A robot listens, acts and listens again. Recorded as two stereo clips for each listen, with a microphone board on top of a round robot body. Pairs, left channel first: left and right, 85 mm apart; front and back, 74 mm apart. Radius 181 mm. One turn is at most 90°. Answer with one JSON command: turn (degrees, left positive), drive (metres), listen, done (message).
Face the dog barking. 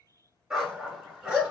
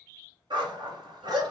{"turn": -90}
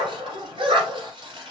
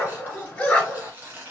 {"turn": -75}
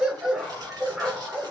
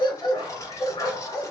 {"done": "Found it: a dog barking, straight ahead, 1 to 2 m away."}